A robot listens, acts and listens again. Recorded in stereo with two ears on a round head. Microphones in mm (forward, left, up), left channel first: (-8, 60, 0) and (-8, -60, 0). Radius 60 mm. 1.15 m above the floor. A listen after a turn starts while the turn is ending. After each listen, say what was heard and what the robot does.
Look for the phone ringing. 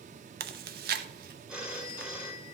Turn 30° right.
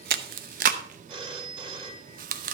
So it is at 145° right. Turn 145° right.
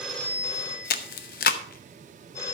The phone ringing is now 20° left. Turn 20° left.
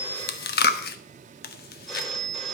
Facing the phone ringing, 1 to 2 m away.